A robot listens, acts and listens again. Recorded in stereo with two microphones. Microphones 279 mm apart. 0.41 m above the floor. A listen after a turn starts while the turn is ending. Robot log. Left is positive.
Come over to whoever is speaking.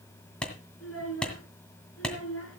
note: The child speaking: about 55° left or 125° left.
cmd yaw +55
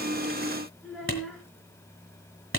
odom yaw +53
cmd fwd 1.0
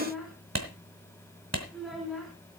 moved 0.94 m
cmd fwd 1.0
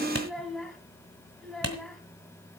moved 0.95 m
cmd fwd 1.0
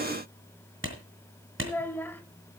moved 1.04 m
note: The child speaking is now 10° left.
cmd yaw +10
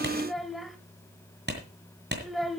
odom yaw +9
cmd fwd 1.0
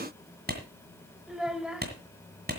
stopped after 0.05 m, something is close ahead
end: I am next to the child speaking.